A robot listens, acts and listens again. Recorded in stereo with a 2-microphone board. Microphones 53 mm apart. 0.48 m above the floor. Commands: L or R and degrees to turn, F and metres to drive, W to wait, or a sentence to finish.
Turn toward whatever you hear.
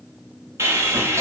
R65
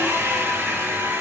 R50
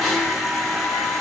Found it: sawing, straight ahead, under 1 m away.